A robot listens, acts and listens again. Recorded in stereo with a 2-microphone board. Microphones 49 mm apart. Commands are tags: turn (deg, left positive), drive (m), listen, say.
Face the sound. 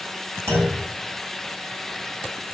<turn deg="-65"/>
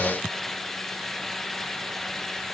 <listen/>
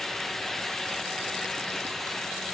<say>I heard a clunk, but can't make it out now. It was about straight ahead or 50° right.</say>